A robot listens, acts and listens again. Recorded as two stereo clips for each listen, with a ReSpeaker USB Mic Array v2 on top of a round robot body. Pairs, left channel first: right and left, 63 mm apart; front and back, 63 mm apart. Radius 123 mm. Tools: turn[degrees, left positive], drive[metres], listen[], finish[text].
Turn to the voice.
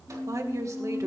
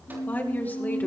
Thought: The woman speaking: 60° left.
Action: turn[60]
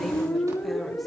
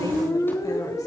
Action: listen[]
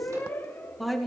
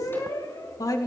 Action: finish[Facing the woman speaking.]